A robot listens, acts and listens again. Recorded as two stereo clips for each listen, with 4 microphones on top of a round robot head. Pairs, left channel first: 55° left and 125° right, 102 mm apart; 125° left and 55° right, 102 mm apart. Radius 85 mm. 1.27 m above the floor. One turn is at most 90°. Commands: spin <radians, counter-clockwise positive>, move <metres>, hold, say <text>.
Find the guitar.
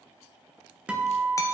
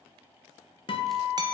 spin 1.57
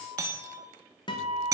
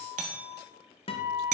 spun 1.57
spin 1.57
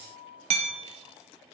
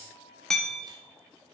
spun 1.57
spin 0.17
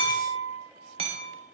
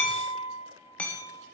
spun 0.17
say Facing the guitar, 1 to 2 m away.